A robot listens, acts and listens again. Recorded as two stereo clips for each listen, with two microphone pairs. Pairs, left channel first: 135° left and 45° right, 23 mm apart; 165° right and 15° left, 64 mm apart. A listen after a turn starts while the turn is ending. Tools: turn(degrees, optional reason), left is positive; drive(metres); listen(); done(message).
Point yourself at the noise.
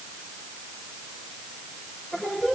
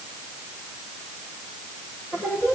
turn(degrees=135, reason="The singing: 135° left.")
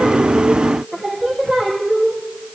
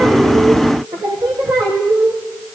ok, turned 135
turn(degrees=25, reason="The singing is now 25° left.")
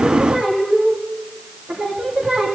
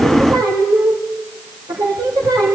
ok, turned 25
done("Found it: singing, straight ahead.")